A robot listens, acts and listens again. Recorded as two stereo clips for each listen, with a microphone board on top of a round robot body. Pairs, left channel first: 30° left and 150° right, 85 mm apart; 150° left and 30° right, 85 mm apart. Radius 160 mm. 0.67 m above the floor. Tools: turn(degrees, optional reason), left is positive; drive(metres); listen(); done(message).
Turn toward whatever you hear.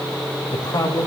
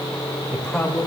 turn(degrees=65, reason="The man speaking: 65° left.")
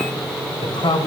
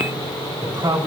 done("Facing the man speaking, over 4 m away.")